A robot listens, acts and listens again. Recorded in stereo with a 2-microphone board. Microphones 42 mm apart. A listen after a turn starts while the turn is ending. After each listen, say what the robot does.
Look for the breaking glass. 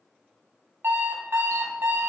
Keep listening.
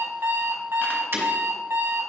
Turn 65° right.
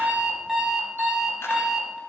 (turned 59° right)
Keep listening.
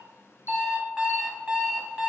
I heard breaking glass, but can't make it out now. It was about 5° right or 55° right.